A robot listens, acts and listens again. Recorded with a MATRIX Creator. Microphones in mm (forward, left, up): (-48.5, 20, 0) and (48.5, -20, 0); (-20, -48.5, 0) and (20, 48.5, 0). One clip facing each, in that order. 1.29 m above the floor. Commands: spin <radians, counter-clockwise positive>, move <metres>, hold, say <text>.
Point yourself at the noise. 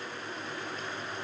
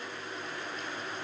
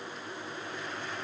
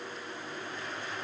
hold
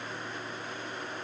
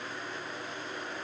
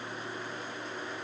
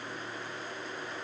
hold
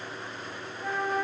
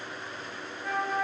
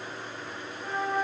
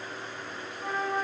spin 2.18
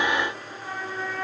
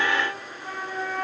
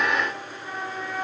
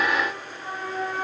spin 0.35
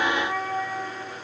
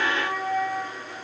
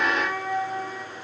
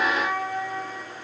say Facing the flute.